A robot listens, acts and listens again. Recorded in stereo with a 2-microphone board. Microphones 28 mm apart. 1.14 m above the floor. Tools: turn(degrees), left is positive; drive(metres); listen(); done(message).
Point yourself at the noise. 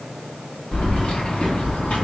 turn(degrees=60)
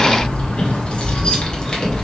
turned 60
turn(degrees=25)
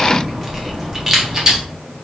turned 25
turn(degrees=-25)
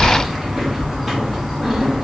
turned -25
turn(degrees=-10)
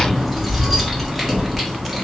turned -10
done("Found it: keys jangling, straight ahead.")